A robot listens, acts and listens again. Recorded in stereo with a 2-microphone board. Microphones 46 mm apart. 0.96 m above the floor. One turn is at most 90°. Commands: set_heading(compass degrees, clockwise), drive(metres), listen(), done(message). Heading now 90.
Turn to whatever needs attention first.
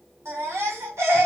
set_heading(165)
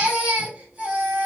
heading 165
set_heading(195)
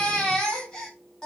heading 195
set_heading(180)
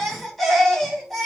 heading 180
done("Found it: a baby crying, straight ahead, 1 to 2 m away.")